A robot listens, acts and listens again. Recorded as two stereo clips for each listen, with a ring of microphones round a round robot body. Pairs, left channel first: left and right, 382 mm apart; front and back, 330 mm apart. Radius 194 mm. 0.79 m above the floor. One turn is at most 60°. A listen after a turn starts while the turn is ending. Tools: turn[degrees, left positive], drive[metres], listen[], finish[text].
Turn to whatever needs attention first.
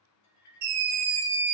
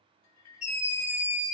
Thought: The scream: 75° right.
Action: turn[-60]
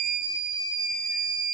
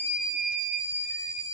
Thought: The scream is now 20° right.
Action: turn[-20]
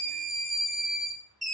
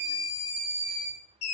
Action: finish[Facing the scream.]